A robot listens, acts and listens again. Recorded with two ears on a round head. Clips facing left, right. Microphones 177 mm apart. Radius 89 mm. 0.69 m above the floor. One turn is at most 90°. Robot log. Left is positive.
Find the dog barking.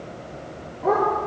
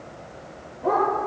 note: The dog barking: about 50° left or 130° left.
cmd yaw +50
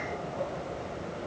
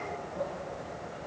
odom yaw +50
cmd idle
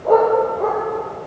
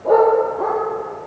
note: So it is at 10° right.
cmd yaw -10
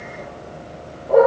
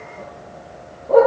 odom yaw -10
end: Facing the dog barking.